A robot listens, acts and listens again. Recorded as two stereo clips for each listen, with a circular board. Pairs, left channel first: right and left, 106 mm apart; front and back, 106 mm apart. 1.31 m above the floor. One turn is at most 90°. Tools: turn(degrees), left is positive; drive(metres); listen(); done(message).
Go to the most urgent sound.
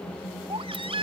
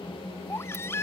turn(degrees=65)
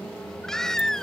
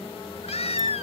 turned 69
drive(metres=1.0)
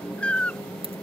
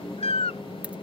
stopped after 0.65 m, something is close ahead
turn(degrees=-10)
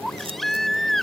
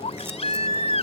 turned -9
done("Blocked. The baby crying is further on, straight ahead.")